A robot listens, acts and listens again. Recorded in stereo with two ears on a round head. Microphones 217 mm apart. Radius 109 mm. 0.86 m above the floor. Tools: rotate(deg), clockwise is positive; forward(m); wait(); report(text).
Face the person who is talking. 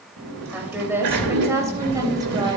rotate(30)
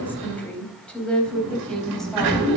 report("Facing the woman speaking.")